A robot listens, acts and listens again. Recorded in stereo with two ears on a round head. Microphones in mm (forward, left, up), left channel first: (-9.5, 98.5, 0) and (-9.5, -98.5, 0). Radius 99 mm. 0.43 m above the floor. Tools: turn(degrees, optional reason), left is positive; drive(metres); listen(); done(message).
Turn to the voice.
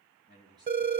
turn(degrees=-20, reason="The man speaking: about 20° right or 160° right.")
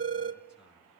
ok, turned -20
turn(degrees=-30)
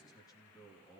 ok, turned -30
turn(degrees=15, reason="So it is at 15° left.")
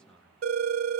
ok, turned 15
done("Found it: a man speaking, straight ahead, over 4 m away.")